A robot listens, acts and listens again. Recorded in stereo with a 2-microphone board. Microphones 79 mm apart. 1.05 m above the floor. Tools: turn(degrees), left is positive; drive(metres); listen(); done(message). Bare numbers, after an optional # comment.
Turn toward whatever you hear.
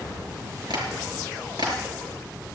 # The tapping: about 70° right or 110° right.
turn(-70)
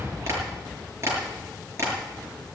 # So it is at 40° right.
turn(-40)
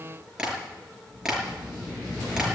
# The tapping is now 10° right.
turn(-10)
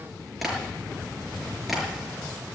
done("Found it: tapping, straight ahead, over 4 m away.")